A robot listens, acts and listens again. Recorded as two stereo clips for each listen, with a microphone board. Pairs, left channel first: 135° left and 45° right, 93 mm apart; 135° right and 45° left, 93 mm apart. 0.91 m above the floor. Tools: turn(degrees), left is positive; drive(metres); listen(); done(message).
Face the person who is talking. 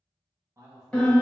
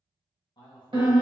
turn(degrees=-100)
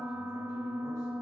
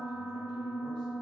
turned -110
turn(degrees=10)
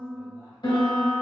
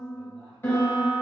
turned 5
listen()
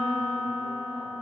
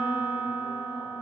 done("I heard a man speaking from this way, but can't make it out now.")